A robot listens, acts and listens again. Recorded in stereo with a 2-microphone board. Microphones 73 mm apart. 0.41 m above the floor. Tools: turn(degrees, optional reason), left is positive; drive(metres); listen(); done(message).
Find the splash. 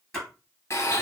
turn(degrees=30)
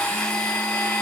listen()
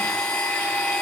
done("I heard a splash, but can't make it out now. It was about 25° right or 145° left.")